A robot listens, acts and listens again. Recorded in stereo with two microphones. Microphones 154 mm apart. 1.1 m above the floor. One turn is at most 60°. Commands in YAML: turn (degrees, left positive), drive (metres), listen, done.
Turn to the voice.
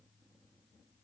listen: true
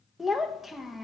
turn: 30
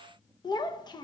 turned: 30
turn: 60
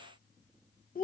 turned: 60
turn: 60
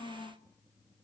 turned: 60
turn: 35
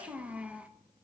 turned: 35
turn: -10
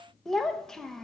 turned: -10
done: "Facing the child speaking."